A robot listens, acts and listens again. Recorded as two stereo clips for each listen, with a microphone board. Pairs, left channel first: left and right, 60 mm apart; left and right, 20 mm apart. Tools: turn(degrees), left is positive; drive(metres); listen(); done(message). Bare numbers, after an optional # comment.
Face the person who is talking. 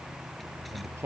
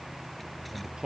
# The man speaking: about 45° right or 135° right.
turn(-45)
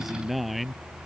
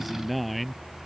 done("Found it: a man speaking, straight ahead.")